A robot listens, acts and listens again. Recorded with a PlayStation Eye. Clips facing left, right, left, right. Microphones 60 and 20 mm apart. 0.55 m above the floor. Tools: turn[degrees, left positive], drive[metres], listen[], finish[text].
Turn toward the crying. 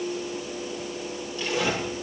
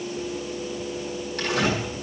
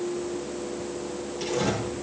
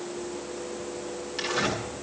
Action: listen[]
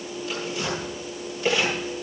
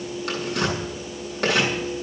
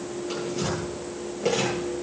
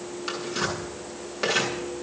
Action: listen[]
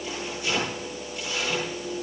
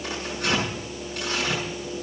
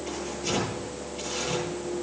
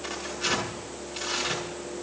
Action: finish[I can't make out crying, only tearing paper.]